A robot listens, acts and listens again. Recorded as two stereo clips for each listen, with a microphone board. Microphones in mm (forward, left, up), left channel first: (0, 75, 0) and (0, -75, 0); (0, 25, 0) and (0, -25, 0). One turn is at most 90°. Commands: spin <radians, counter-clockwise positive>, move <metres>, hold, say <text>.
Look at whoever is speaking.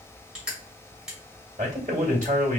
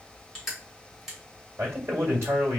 spin -1.05
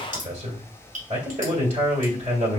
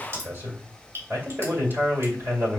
spin -0.96
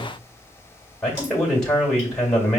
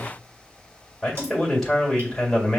say Found it: a man speaking, straight ahead, 2 to 4 m away.